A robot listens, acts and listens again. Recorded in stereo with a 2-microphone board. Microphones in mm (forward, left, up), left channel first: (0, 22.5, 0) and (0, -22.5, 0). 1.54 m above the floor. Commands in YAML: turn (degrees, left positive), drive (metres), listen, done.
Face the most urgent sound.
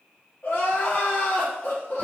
turn: 50
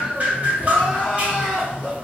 turn: 15
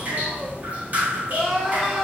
done: "Facing the crying, 1 to 2 m away."